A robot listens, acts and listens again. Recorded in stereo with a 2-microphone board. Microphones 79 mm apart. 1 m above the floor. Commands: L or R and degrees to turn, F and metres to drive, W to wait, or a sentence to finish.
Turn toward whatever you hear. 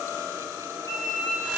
L50
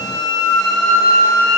L10
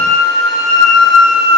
Facing the flute, 1 to 2 m away.